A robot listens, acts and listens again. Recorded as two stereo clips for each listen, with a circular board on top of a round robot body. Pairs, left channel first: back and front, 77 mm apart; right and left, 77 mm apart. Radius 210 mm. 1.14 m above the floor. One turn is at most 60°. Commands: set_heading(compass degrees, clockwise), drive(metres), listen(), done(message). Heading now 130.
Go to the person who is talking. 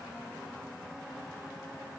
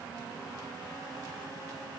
listen()
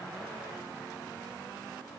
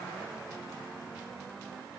listen()
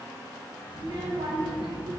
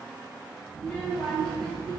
set_heading(140)
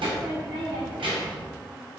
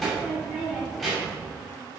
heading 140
drive(1.0)
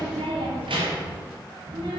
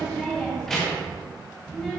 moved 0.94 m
drive(1.0)
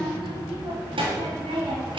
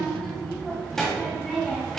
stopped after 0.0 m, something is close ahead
done("Arrived at the child speaking, straight ahead.")